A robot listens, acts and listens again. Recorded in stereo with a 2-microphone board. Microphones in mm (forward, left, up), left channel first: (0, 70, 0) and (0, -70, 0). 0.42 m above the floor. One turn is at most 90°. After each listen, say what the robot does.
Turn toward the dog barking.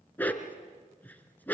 Turn 30° left.
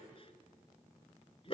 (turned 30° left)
Turn 90° left.
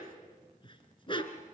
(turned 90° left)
Turn 35° left.
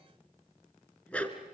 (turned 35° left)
Turn 10° left.
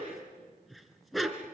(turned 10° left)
Facing the dog barking.